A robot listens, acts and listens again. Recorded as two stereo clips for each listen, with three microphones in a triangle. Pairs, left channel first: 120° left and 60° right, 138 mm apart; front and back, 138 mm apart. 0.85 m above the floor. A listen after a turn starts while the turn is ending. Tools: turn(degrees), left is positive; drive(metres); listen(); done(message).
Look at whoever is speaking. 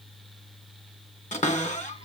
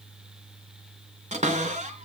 listen()
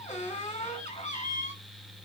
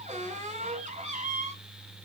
listen()
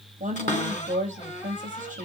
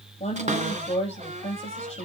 turn(degrees=-35)
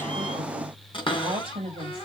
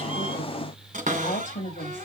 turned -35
turn(degrees=-10)
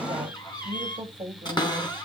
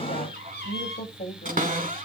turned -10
done("Facing the woman speaking, over 4 m away.")